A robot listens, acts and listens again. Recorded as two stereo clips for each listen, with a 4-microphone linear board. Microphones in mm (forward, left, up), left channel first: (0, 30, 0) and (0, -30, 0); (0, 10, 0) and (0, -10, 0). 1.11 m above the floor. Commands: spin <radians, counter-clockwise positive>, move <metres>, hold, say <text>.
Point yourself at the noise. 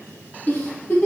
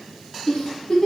spin 0.61
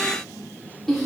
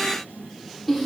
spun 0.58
say Facing the giggle.